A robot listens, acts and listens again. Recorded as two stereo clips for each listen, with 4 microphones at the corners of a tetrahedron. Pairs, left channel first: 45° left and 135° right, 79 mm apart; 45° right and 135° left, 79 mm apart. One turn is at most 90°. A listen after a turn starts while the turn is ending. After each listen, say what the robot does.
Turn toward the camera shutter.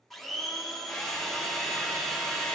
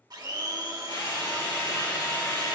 Keep listening.
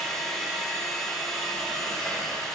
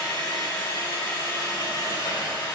Keep listening.
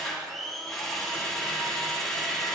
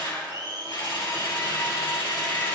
I can't make out a camera shutter, only a blender and a drill.